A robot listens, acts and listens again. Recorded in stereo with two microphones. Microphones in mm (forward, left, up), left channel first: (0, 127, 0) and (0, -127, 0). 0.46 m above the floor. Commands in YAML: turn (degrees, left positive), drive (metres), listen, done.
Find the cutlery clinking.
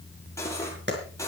turn: 30
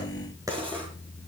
listen: true
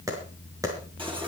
listen: true
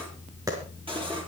done: "I heard cutlery clinking, but can't make it out now. It was about 20° right or 140° left."